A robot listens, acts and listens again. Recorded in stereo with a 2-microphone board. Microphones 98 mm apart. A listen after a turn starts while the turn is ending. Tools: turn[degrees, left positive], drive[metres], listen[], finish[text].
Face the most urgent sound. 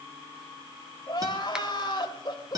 Thought: The crying: about 50° left or 130° left.
Action: turn[50]
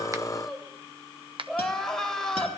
Action: finish[Found it: crying, straight ahead, 2 to 4 m away.]